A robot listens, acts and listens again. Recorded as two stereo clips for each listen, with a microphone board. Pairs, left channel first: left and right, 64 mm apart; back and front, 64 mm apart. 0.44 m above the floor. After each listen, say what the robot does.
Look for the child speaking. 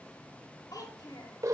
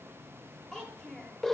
Turn 100° left.
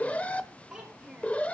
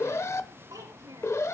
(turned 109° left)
Turn 10° right.
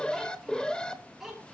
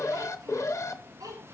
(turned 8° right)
Facing the child speaking.